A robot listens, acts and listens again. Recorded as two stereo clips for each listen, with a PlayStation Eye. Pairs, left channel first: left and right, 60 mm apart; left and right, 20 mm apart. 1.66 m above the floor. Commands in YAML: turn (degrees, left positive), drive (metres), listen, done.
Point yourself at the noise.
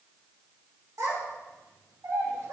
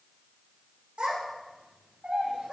turn: -70
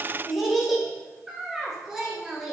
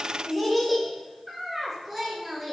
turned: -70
turn: -10
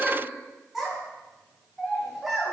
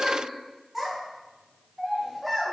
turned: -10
done: "Facing the child speaking, over 4 m away."